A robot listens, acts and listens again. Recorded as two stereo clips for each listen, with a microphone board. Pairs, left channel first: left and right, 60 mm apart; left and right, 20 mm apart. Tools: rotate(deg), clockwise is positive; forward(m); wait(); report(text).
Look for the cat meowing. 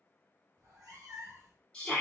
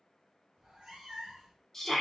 rotate(90)
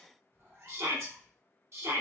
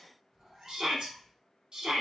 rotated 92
rotate(55)
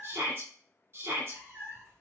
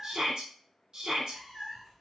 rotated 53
rotate(35)
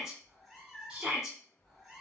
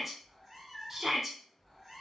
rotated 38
report("Found it: a cat meowing, straight ahead.")